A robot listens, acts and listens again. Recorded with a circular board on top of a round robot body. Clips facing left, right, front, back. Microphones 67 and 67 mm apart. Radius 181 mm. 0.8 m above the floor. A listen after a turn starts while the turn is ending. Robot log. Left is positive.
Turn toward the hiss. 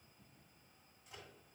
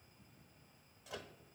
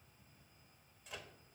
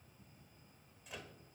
cmd idle
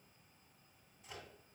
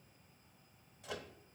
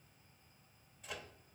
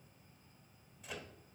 cmd idle
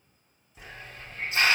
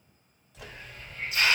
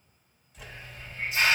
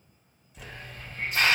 note: The hiss: 145° left.
cmd yaw +145
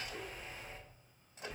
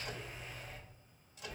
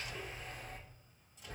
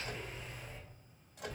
note: The hiss is now 30° left.
cmd yaw +30
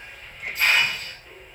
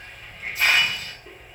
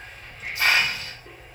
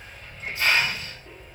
end: Facing the hiss.